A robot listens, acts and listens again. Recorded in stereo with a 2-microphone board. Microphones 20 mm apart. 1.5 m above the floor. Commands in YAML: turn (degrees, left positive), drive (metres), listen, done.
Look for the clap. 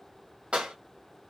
turn: -60
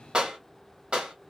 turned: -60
turn: -50
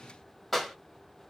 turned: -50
done: "Found it: a clap, straight ahead, 1 to 2 m away."